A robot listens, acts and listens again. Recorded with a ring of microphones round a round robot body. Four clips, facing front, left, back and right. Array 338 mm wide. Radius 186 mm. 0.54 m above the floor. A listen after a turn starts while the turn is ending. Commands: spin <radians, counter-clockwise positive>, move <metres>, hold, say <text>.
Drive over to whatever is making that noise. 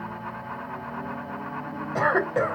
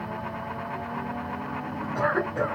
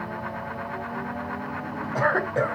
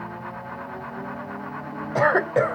spin -1.57
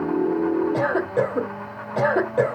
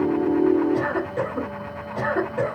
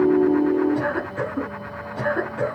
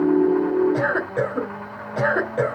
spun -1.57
spin -0.35
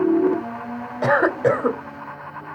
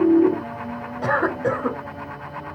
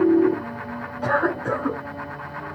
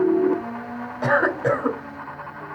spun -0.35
move 1.0
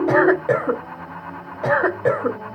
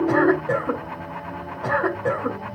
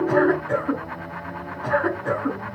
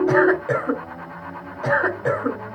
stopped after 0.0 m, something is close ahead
say Something is in my way. I am facing the cough but have not reached it.